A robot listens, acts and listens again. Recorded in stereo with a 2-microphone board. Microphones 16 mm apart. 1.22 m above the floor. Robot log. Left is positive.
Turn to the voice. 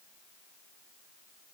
cmd idle
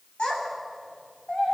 cmd yaw +90
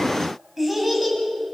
end: Facing the child speaking, over 4 m away.